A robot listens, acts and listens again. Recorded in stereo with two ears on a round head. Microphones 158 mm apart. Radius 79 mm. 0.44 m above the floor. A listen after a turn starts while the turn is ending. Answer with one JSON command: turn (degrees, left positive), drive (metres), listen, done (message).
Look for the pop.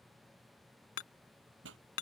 {"turn": -90}
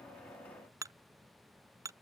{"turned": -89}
{"done": "I heard a pop from this way, but can't make it out now."}